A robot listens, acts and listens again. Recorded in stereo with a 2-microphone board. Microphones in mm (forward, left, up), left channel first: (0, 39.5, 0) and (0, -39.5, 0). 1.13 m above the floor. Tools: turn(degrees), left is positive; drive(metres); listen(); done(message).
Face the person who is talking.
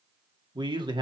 turn(degrees=-70)
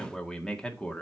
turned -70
turn(degrees=15)
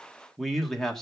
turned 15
done("Facing the man speaking, 1 to 2 m away.")